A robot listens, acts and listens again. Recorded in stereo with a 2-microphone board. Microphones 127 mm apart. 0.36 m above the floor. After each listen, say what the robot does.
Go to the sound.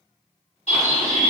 Turn 60° left.
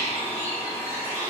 Turn 30° left.
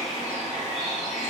Drive 1.0 m forward.
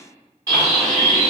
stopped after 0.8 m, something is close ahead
I am next to the bird.